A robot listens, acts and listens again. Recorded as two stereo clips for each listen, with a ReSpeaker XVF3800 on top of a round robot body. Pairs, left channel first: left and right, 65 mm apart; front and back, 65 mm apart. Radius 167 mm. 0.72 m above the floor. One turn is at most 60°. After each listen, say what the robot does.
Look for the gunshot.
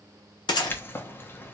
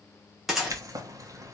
Turn 60° left.
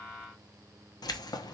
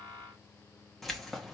Turn 35° left.
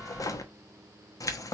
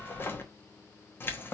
Facing where the gunshot came from. I can't hear it now.